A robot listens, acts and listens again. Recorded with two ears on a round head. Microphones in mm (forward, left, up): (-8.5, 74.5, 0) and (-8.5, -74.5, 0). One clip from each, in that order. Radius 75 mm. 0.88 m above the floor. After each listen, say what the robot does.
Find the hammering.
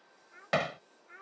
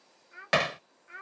Turn 45° right.
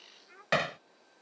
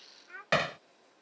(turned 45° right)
Turn 10° right.
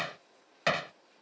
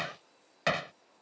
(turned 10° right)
Found it: hammering, straight ahead.